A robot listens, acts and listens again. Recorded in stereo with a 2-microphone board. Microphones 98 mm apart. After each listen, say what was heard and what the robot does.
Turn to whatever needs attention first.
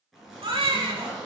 The baby crying: about 60° right or 120° right. Turn 60° right.
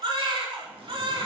So it is at 55° right. Turn 55° right.
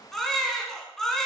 Facing the baby crying.